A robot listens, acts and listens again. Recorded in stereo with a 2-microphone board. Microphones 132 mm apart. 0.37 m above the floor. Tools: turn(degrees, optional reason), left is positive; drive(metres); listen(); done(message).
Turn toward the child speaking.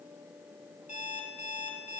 listen()
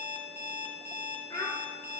turn(degrees=35, reason="The child speaking: about 35° left or 145° left.")
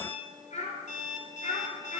turn(degrees=110, reason="So it is at 110° left.")
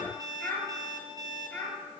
turn(degrees=10, reason="The child speaking is now 10° left.")
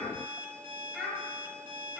done("Facing the child speaking, over 4 m away.")